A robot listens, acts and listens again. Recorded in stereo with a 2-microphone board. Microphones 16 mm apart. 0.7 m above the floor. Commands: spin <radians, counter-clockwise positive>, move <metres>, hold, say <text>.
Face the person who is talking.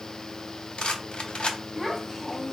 spin 0.52
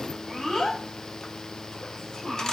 spin 2.53
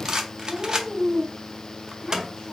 spin -0.61
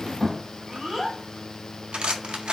spin -0.17
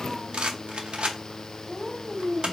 spin -0.17
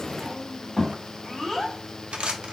say Found it: a child speaking, straight ahead, 1 to 2 m away.